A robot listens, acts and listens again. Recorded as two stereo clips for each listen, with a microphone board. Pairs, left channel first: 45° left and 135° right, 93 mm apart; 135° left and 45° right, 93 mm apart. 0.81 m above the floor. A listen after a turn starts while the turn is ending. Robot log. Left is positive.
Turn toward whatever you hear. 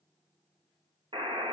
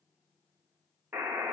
note: The buzzer: 115° right.
cmd yaw -115
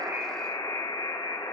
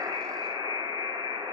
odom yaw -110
end: Facing the buzzer.